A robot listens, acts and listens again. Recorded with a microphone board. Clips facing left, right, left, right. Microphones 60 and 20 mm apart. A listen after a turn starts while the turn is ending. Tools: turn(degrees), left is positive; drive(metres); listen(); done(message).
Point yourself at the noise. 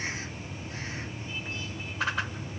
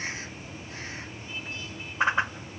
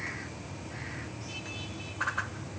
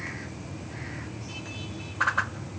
turn(degrees=-25)
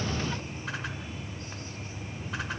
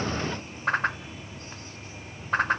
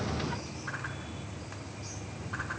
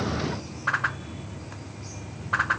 turn(degrees=-130)
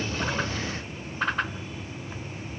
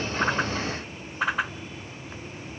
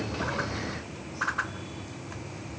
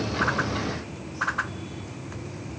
done("Found it: a whoosh, straight ahead.")